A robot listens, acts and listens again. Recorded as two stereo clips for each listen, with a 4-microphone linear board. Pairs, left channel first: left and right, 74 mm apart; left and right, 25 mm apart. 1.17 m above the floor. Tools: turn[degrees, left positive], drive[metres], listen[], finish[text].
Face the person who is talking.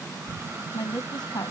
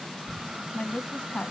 Thought: The woman speaking: about 65° left or 115° left.
Action: turn[65]
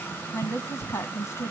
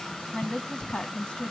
Thought: So it is at 45° left.
Action: turn[45]
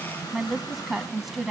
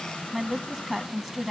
Action: finish[Facing the woman speaking.]